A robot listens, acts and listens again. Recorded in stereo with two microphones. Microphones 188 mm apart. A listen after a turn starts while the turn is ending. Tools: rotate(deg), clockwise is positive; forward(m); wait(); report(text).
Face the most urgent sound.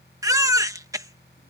rotate(15)
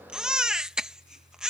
report("Facing the baby crying.")